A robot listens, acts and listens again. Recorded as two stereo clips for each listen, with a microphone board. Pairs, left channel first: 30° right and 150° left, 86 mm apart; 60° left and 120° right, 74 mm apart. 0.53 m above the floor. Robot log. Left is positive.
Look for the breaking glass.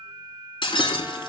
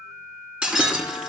note: The breaking glass: 45° right.
cmd yaw -45
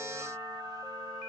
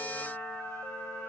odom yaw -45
end: Facing where the breaking glass came from. I can't hear it now.